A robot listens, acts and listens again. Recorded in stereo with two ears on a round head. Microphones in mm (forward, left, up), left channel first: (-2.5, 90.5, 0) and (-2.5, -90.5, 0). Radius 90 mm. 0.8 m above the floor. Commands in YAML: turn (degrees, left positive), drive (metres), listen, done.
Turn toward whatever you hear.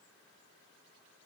listen: true
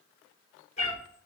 turn: 30
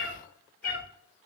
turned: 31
turn: 135
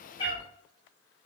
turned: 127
turn: 30
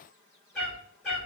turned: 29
done: "Facing the cat meowing, 2 to 4 m away."